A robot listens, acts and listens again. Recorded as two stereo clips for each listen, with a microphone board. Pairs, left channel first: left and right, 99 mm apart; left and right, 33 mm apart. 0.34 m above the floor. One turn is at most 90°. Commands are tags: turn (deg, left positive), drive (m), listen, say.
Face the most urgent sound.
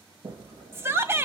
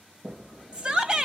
<turn deg="-25"/>
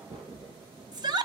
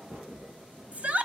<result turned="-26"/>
<turn deg="-90"/>
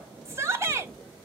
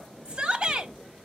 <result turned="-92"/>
<turn deg="-35"/>
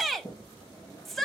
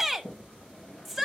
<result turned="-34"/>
<say>Facing the shout.</say>